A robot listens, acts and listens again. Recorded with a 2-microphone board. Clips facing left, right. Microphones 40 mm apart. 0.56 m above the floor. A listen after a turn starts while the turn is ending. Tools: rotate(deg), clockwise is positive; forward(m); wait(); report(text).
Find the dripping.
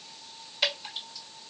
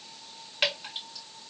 rotate(50)
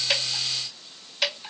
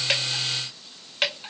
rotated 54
rotate(65)
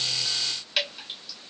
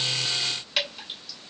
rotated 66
report("Facing the dripping.")